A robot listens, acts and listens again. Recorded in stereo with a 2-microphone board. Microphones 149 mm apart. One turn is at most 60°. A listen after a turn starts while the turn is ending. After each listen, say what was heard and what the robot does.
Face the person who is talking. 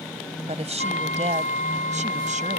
The woman speaking: about 50° right or 130° right. Turn 50° right.
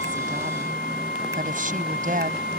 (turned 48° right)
So it is at 60° right. Turn 60° right.
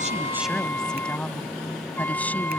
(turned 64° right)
Keep listening.
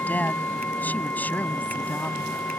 Keep listening.
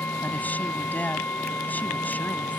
The woman speaking is now 10° left. Turn 10° left.
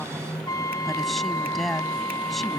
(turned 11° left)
Facing the woman speaking.